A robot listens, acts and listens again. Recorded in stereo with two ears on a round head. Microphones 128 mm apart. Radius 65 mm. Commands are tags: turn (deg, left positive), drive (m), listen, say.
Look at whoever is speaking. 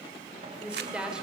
<turn deg="-30"/>
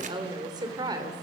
<turn deg="-150"/>
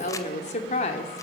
<turn deg="45"/>
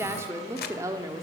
<turn deg="-25"/>
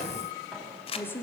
<turn deg="15"/>
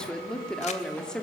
<say>Facing the woman speaking, 2 to 4 m away.</say>